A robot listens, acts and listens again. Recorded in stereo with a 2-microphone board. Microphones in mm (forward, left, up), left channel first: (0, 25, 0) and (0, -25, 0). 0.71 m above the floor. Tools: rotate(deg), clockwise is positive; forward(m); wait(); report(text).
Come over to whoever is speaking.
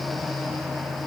wait()
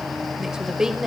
rotate(30)
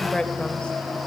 rotate(-20)
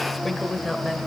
forward(1.0)
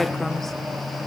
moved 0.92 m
wait()
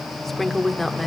forward(1.0)
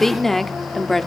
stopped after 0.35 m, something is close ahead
report("Arrived at the woman speaking, straight ahead.")